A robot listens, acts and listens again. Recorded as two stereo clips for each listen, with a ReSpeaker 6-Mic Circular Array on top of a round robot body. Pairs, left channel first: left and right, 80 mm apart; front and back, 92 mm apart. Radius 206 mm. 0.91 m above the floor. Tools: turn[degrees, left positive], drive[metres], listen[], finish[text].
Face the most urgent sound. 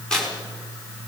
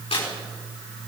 Action: listen[]
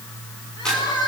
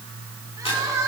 Thought: The crying: 125° left.
Action: turn[125]
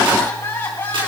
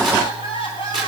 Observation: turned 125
Thought: The crying is now 25° left.
Action: turn[25]
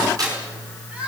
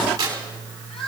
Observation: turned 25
Thought: The crying is now 15° right.
Action: turn[-15]
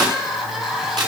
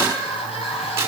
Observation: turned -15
Action: finish[Found it: crying, straight ahead, 2 to 4 m away.]